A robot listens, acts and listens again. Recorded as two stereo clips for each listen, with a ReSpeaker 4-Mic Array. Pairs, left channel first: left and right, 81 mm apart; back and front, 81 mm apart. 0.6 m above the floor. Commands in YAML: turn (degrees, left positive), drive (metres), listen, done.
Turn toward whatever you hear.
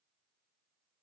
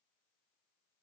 listen: true
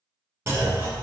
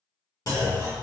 turn: -140
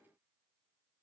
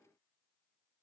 done: "I heard a clunk from this way, but can't make it out now."